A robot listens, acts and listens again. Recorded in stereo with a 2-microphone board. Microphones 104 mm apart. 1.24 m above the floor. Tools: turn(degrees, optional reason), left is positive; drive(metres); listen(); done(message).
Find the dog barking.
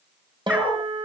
turn(degrees=-30)
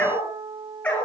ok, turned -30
turn(degrees=15, reason="So it is at 15° left.")
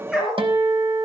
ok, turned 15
done("Facing the dog barking.")